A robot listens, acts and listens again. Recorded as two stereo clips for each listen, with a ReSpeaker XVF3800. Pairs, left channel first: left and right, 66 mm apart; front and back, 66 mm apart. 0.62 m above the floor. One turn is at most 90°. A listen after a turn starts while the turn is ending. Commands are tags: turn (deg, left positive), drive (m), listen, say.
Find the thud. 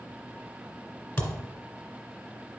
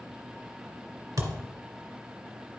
<turn deg="90"/>
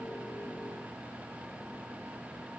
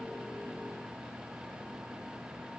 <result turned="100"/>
<turn deg="55"/>
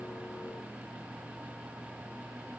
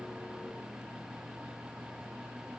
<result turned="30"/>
<turn deg="25"/>
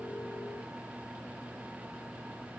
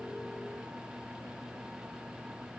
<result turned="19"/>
<turn deg="10"/>
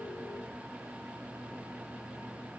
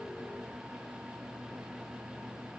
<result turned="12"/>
<say>Facing where the thud came from. I can't hear it now.</say>